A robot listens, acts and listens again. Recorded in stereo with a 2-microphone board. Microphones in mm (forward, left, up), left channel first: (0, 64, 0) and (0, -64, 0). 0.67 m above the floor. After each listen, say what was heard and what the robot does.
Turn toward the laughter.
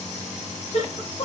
The laughter: about 65° left or 115° left. Turn 65° left.
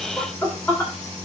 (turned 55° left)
So it is at 15° left. Turn 15° left.
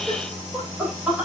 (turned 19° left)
The laughter is now 10° right. Turn 10° right.
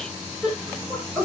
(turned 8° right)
The laughter is now 10° right. Turn 10° right.
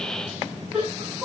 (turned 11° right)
Found it: laughter, straight ahead, over 4 m away.